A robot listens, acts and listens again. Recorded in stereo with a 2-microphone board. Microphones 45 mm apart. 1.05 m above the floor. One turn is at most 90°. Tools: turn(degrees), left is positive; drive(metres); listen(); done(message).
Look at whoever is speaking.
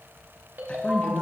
turn(degrees=30)
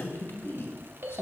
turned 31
turn(degrees=90)
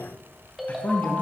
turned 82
turn(degrees=40)
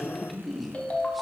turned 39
done("Facing the man speaking, 1 to 2 m away.")